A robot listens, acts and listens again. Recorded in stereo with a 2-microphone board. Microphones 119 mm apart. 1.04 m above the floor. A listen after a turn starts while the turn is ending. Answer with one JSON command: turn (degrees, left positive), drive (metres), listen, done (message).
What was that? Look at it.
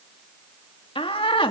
{"turn": 45}
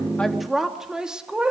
{"turn": -10}
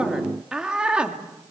{"turn": -10}
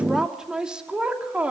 {"turn": -10}
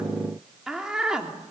{"done": "Found it: a woman speaking, straight ahead."}